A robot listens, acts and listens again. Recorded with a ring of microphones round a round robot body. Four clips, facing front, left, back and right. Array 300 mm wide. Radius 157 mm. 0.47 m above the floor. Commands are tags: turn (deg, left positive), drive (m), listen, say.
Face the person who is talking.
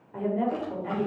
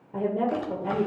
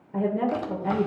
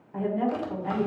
<turn deg="125"/>
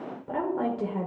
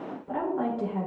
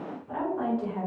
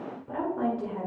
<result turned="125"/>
<say>Found it: a woman speaking, straight ahead, 1 to 2 m away.</say>